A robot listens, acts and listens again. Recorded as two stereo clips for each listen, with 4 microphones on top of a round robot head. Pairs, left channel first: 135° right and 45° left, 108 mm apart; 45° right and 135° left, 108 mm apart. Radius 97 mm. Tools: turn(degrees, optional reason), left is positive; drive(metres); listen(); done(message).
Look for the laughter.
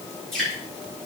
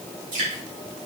listen()
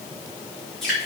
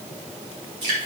listen()
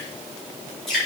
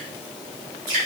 done("I can't make out laughter to turn to.")